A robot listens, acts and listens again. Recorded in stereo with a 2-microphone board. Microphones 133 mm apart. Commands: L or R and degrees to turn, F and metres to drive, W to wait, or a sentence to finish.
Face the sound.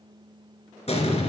L55
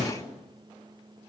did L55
L70
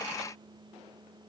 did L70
I heard an explosion from this way, but can't make it out now.